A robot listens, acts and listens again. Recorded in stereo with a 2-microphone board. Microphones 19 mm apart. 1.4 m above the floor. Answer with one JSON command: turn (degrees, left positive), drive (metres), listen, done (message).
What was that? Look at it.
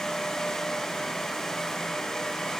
{"listen": true}
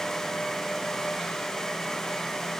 {"listen": true}
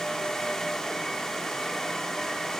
{"done": "I can't make out anything to turn to."}